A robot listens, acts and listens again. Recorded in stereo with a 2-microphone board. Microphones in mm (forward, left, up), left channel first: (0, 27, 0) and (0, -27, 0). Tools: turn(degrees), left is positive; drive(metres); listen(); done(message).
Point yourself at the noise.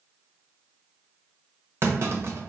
turn(degrees=-50)
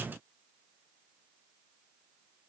listen()
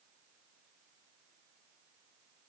done("I heard a clunk, but can't make it out now. It was about straight ahead or 80° right.")